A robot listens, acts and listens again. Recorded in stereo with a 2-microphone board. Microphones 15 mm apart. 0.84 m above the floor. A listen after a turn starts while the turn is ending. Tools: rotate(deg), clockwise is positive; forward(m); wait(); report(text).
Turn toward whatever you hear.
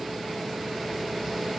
wait()
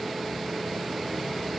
wait()
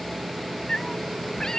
rotate(-40)
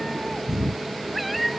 report("Found it: a cat meowing, straight ahead.")